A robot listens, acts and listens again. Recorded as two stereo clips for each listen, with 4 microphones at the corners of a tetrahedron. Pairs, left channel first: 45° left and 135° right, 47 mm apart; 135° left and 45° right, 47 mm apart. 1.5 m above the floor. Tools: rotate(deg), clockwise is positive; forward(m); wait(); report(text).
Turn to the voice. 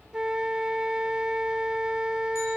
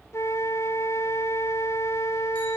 wait()
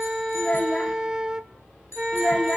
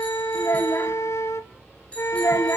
rotate(-110)
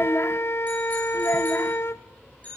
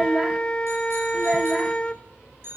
rotate(-25)
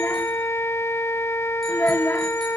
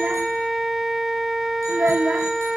report("Found it: a child speaking, straight ahead.")